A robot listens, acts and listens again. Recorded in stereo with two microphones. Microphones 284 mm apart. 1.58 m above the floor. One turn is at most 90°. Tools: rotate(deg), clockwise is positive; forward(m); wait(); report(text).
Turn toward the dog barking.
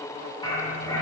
rotate(-30)
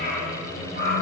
rotate(-90)
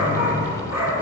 rotate(-70)
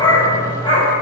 rotate(-20)
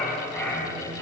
report("Facing the dog barking, 2 to 4 m away.")